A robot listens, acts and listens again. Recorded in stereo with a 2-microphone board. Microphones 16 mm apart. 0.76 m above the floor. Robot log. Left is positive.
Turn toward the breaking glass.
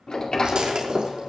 note: The breaking glass: about 60° right or 120° right.
cmd yaw -60
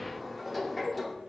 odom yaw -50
cmd idle
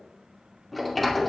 end: I heard breaking glass, but can't make it out now. It was about 10° right or 70° right.